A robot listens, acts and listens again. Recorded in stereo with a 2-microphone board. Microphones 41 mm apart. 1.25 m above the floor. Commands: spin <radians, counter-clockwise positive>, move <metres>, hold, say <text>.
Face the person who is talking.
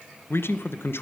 spin 1.57
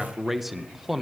say Found it: a man speaking, straight ahead, 1 to 2 m away.